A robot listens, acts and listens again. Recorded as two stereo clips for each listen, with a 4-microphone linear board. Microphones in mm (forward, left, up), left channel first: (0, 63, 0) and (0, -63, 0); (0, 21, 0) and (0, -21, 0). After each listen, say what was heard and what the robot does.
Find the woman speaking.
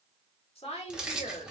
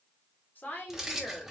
The woman speaking: about 55° left or 125° left. Turn 55° left.
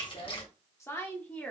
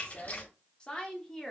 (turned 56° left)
So it is at 10° left. Turn 10° left.
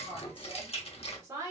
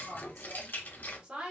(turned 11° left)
The woman speaking is now 25° right. Turn 25° right.
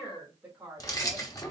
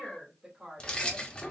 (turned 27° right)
The woman speaking is now 10° right. Turn 10° right.
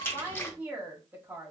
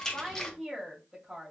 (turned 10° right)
The woman speaking is now 10° right. Turn 10° right.
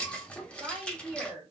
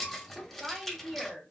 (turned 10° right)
Facing the woman speaking, 2 to 4 m away.